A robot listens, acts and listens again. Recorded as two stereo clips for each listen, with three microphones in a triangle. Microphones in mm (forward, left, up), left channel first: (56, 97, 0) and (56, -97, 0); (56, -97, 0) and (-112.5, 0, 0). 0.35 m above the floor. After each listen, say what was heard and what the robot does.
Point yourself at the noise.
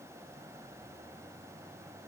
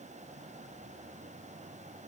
Keep listening.
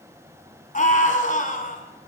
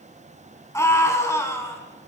The scream: 45° left. Turn 45° left.
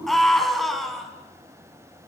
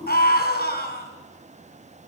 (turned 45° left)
Found it: a scream, straight ahead.